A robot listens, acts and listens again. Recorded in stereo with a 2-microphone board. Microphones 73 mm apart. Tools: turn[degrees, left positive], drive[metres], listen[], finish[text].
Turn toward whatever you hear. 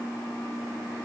Action: listen[]
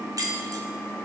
Thought: The keys jangling: about 55° right or 125° right.
Action: turn[-55]
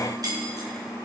Thought: So it is at 60° right.
Action: turn[-60]
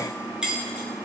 Thought: The keys jangling is now 10° right.
Action: turn[-10]
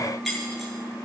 Action: finish[Facing the keys jangling.]